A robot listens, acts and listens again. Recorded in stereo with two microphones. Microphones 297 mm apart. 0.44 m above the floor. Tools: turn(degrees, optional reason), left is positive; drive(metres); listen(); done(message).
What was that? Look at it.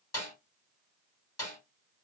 turn(degrees=60, reason="The snare drum: about 60° left or 120° left.")
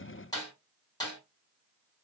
turn(degrees=15, reason="So it is at 15° left.")
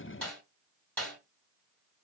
done("Facing the snare drum.")